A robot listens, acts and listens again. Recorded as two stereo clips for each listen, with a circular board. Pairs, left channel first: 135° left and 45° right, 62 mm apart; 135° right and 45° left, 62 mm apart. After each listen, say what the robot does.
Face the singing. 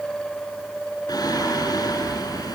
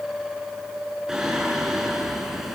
Turn 130° left.
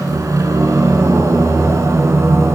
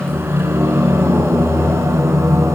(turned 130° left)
Facing the singing.